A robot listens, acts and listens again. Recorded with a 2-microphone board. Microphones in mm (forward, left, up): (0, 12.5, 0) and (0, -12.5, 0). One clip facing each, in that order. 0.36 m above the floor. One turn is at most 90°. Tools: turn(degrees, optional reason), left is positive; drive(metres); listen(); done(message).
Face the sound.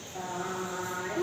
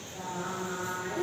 turn(degrees=30)
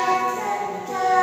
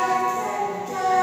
turn(degrees=30)
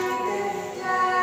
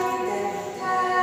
turn(degrees=30)
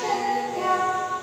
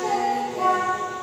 turn(degrees=20, reason="The singing: about 20° left or 160° left.")
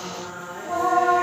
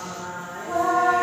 turn(degrees=25, reason="The singing: about 25° left or 155° left.")
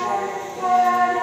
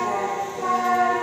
turn(degrees=90, reason="So it is at 130° left.")
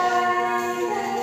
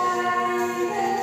turn(degrees=40, reason="The singing is now 40° left.")
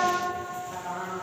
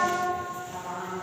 done("Facing the singing, 2 to 4 m away.")